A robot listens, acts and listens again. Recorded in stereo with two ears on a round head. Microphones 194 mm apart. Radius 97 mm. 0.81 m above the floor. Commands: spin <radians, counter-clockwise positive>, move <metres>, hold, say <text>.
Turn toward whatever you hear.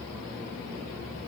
hold
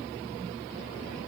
hold
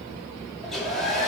spin 0.52
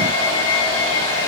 spin 2.62
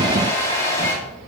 spin 0.26
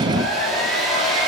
say Facing the hair dryer.